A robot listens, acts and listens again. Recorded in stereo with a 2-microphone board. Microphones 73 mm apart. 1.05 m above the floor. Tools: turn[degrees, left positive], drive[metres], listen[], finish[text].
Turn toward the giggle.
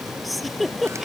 Action: turn[30]
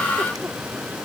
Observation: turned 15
Action: listen[]
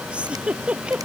Thought: So it is at 15° right.
Action: turn[-15]
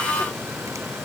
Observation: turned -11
Action: listen[]
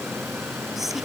Action: finish[Found it: a giggle, straight ahead.]